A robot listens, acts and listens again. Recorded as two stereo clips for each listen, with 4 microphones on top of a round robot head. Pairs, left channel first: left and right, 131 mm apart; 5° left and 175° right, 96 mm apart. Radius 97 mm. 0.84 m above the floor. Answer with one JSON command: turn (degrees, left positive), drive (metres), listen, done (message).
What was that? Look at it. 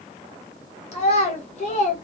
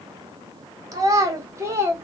{"turn": 125}
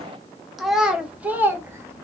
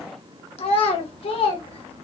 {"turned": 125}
{"turn": -15}
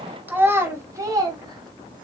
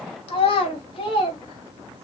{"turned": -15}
{"turn": -30}
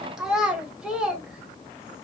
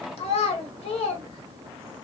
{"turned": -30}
{"done": "Found it: a child speaking, straight ahead, 1 to 2 m away."}